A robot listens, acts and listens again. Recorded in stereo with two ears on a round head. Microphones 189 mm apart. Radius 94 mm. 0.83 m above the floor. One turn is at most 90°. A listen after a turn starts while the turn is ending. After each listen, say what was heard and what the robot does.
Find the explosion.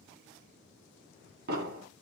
The explosion: about 50° right or 130° right. Turn 50° right.
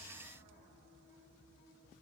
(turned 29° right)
Keep listening.
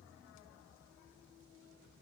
I heard an explosion, but can't make it out now. It was about 20° right or 100° right.